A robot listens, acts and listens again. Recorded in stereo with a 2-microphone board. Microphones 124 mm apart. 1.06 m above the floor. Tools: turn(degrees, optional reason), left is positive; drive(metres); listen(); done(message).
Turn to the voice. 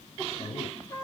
turn(degrees=65, reason="The man speaking: about 65° left or 115° left.")
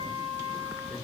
listen()
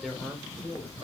done("Found it: a man speaking, straight ahead, 2 to 4 m away.")